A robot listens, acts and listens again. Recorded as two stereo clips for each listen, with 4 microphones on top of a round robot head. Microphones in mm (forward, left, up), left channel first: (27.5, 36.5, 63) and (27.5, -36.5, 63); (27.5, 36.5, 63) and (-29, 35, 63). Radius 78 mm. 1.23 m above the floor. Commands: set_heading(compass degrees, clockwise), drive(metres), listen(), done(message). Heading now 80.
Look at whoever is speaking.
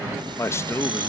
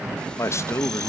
set_heading(45)
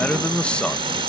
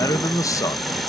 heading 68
set_heading(58)
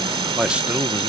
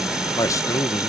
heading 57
set_heading(77)
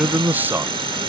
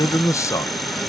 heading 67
set_heading(97)
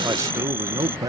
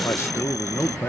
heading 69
set_heading(124)
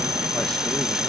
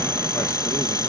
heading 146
set_heading(126)
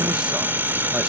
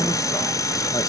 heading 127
listen()
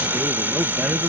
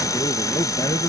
set_heading(137)
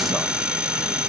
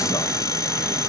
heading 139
listen()
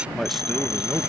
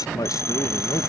done("Found it: a man speaking, straight ahead.")